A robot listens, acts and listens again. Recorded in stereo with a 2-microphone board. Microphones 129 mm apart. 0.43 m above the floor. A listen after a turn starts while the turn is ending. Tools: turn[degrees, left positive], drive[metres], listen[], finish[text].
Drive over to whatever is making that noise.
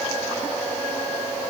Action: listen[]
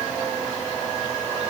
Action: listen[]
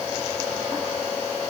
Action: finish[I can't make out anything.]